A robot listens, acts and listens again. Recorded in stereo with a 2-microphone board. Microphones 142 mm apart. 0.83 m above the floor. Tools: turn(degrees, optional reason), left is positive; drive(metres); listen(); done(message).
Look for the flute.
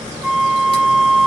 turn(degrees=30)
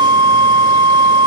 turn(degrees=-35, reason="So it is at 35° right.")
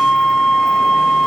done("Facing the flute, under 1 m away.")